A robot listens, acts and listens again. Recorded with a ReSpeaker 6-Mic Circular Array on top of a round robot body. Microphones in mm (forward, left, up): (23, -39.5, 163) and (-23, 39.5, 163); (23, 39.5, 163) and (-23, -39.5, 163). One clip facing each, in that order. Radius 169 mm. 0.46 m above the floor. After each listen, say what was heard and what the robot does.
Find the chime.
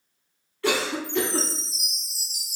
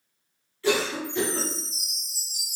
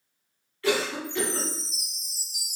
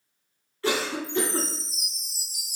The chime: 35° right. Turn 35° right.
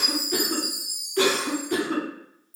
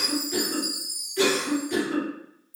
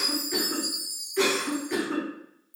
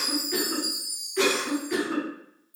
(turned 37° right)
Facing the chime.